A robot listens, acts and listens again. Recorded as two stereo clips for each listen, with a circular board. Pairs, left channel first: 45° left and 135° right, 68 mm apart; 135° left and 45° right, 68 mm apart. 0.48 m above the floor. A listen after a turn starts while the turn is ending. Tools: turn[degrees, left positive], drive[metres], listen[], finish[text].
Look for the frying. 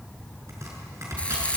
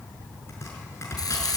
Thought: The frying: 120° left.
Action: turn[120]
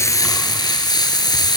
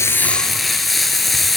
Thought: The frying is now 45° left.
Action: turn[45]
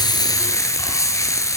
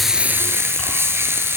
Action: finish[Facing the frying.]